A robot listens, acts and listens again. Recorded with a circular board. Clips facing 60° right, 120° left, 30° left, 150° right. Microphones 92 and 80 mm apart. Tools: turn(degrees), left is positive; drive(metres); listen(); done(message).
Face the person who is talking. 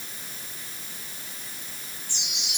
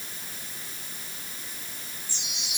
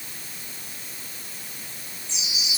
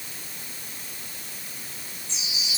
listen()
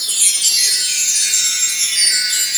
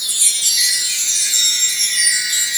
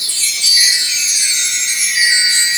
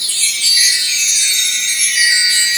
listen()
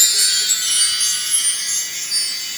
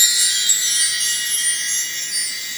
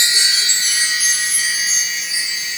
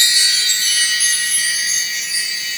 done("I can't make out anyone speaking, only a chime.")